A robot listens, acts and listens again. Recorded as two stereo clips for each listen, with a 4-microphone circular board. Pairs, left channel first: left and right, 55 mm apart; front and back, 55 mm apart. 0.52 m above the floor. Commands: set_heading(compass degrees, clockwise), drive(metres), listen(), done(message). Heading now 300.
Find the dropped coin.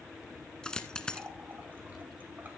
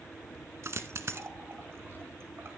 set_heading(140)
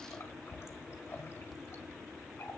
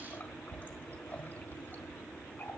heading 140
done("Facing where the dropped coin came from. I can't hear it now.")